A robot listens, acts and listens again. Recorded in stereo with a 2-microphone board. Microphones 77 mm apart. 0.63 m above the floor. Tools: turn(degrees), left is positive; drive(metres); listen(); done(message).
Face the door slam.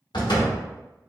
turn(degrees=75)
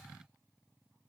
listen()
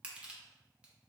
done("I heard a door slam, but can't make it out now. It was about straight ahead or 30° left.")